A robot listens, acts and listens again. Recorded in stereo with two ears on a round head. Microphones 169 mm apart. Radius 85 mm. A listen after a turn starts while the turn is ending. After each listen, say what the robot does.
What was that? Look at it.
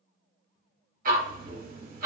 Turn 45° right.
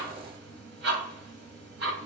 Turn 80° right.
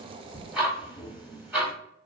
Turn 10° right.
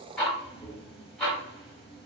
Facing the ticking.